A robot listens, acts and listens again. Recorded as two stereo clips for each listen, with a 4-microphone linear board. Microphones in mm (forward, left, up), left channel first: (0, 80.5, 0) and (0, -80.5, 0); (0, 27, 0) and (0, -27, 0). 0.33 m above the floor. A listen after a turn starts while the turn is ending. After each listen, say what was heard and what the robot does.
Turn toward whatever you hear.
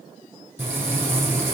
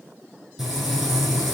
Turn 30° right.
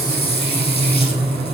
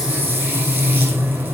So it is at 140° right. Turn 140° right.
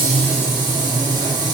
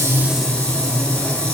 The frying is now 25° left. Turn 25° left.
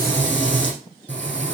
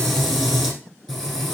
The frying is now 10° left. Turn 10° left.
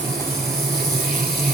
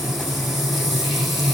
Found it: frying, straight ahead.